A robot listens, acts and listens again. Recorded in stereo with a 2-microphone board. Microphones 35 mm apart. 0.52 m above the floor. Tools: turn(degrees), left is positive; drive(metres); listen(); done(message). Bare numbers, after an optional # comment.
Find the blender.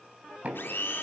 turn(90)
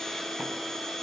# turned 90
# So it is at 10° left.
turn(10)
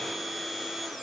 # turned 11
done("Facing the blender.")